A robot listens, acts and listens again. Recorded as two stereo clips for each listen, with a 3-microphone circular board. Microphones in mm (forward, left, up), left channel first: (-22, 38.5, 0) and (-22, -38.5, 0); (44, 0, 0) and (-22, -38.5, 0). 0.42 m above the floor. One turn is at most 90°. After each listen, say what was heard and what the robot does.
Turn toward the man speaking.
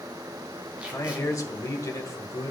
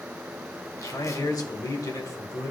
The man speaking: 60° left. Turn 60° left.
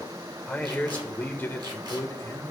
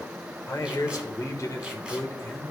The man speaking is now 60° left. Turn 60° left.
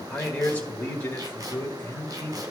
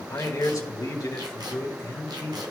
The man speaking is now 35° left. Turn 35° left.
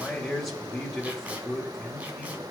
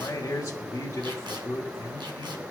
Found it: a man speaking, straight ahead, 1 to 2 m away.